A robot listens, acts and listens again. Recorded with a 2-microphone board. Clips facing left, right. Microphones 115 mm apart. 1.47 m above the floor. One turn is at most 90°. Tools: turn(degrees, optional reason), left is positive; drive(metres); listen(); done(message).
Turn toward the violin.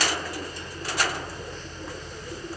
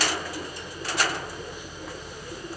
listen()
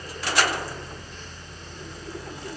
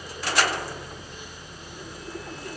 listen()
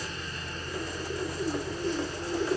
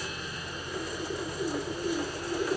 done("I can't make out a violin.")